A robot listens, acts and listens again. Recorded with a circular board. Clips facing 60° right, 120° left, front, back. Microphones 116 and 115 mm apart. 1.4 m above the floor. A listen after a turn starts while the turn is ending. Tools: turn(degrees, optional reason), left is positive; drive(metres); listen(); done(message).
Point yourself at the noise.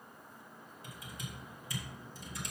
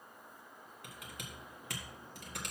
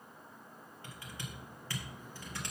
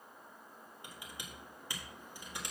turn(degrees=105, reason="The typing on a keyboard: 105° left.")
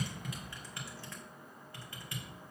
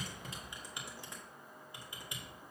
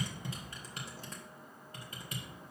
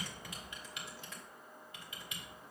turn(degrees=50, reason="The typing on a keyboard is now 50° left.")
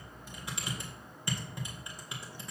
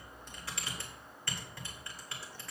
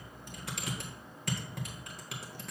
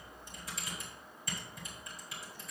turn(degrees=10, reason="The typing on a keyboard is now 10° left.")
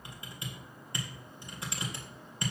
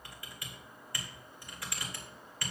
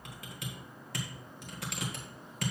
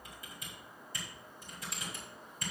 done("Found it: typing on a keyboard, straight ahead.")